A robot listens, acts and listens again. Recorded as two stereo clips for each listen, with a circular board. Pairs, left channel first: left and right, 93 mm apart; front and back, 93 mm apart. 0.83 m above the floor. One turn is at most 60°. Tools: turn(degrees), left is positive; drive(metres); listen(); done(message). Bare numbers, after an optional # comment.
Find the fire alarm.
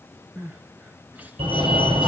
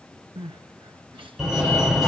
# The fire alarm: 90° right.
turn(-60)
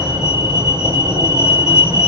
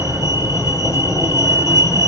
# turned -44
# The fire alarm is now 50° right.
turn(-50)
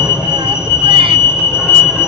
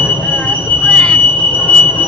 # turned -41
# The fire alarm is now 10° right.
turn(-10)
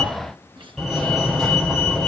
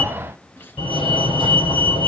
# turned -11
done("Facing the fire alarm, over 4 m away.")